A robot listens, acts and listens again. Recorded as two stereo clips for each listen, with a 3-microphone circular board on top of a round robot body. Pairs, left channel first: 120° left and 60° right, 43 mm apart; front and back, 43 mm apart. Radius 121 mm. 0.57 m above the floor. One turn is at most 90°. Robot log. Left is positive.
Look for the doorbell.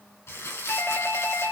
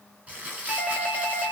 note: The doorbell: 90° left.
cmd yaw +90
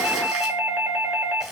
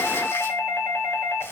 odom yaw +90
note: The doorbell is now 15° right.
cmd yaw -15
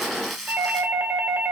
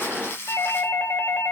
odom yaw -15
end: Facing the doorbell, 2 to 4 m away.